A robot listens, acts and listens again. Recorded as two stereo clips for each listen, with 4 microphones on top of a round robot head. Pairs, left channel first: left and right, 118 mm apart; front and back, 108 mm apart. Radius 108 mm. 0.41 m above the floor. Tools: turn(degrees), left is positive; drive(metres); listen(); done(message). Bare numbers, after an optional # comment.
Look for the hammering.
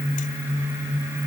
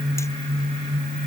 listen()
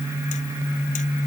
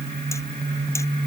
listen()
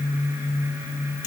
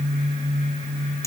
done("I can't make out hammering.")